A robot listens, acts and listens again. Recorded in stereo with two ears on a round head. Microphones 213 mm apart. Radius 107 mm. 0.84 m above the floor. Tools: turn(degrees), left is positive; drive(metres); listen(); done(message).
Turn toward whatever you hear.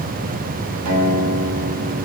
turn(degrees=-90)
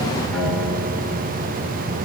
listen()
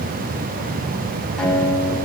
done("Facing the guitar, over 4 m away.")